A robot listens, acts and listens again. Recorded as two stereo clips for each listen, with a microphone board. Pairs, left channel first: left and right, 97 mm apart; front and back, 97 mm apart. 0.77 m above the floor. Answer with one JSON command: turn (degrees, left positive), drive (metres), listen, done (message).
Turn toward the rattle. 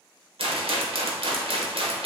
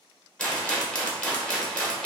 {"turn": -80}
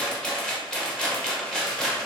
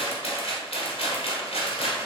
{"turn": 10}
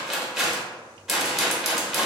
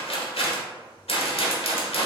{"done": "Facing the rattle, 1 to 2 m away."}